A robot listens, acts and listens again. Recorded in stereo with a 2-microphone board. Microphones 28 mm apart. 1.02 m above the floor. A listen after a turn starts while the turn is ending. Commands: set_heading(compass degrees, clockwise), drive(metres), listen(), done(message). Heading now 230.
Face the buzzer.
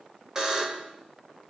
set_heading(255)
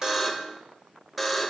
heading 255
done("Found it: a buzzer, straight ahead, 1 to 2 m away.")